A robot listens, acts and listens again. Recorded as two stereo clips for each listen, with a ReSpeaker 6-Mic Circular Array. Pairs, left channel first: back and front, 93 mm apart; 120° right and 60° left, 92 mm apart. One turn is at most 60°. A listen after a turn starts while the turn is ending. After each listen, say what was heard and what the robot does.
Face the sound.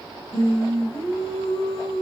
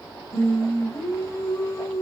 The singing: straight behind. Turn 60° left.
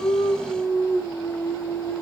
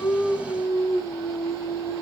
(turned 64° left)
The singing is now 115° left. Turn 60° left.
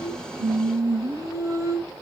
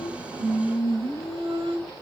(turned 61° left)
The singing is now 55° left. Turn 55° left.
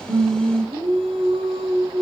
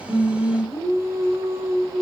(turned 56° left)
Facing the singing, 2 to 4 m away.